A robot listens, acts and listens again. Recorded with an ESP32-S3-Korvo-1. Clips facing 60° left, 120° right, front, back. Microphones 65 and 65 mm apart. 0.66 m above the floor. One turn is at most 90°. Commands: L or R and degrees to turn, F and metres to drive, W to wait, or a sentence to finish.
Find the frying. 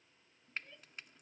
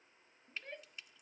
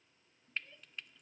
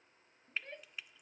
L90
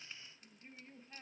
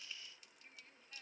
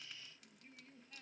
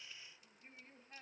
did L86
L10
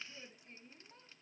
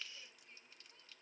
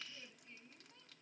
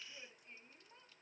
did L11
Facing the frying.